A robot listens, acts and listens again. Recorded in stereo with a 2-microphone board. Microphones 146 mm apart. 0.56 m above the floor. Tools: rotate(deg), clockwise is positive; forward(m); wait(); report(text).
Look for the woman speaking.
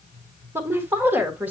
rotate(30)
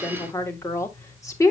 rotate(-20)
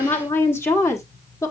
rotate(-25)
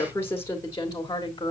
rotate(-30)
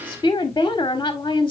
rotate(-25)
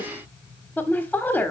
rotate(-10)
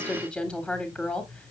report("Facing the woman speaking, 1 to 2 m away.")